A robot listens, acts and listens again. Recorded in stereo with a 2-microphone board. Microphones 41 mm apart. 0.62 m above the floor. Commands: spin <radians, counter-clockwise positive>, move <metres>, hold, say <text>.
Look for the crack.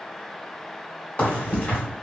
spin 0.61
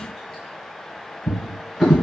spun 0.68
hold
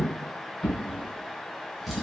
say I heard a crack, but can't make it out now. It was about 5° right or 105° left.